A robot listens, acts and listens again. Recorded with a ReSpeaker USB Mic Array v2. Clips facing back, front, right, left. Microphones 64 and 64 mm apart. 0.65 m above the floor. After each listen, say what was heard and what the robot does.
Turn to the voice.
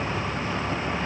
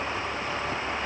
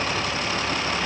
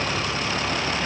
Keep listening.
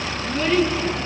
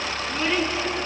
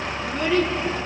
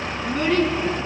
The child speaking: 70° left. Turn 70° left.
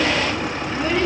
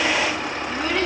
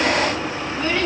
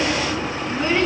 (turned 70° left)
The child speaking is now 25° left. Turn 25° left.
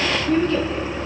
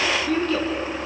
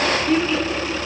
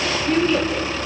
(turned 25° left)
Found it: a child speaking, straight ahead, over 4 m away.